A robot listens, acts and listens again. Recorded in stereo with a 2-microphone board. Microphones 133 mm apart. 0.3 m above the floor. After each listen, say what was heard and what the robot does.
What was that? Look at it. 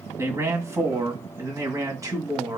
The man speaking: about 25° right or 155° right. Turn 25° right.
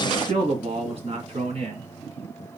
So it is at 125° right. Turn 125° right.
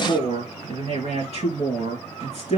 The man speaking is now 60° right. Turn 60° right.
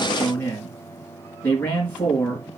The man speaking is now 15° left. Turn 15° left.
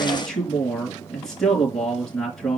Facing the man speaking, 2 to 4 m away.